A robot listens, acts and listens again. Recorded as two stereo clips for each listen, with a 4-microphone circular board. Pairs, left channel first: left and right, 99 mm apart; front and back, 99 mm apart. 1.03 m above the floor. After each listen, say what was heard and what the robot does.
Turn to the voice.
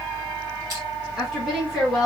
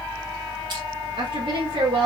The woman speaking: straight behind. Turn 180° left.
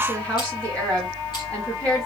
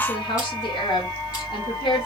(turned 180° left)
The woman speaking is now 10° left. Turn 10° left.
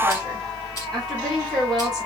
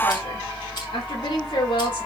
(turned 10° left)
Found it: a woman speaking, straight ahead.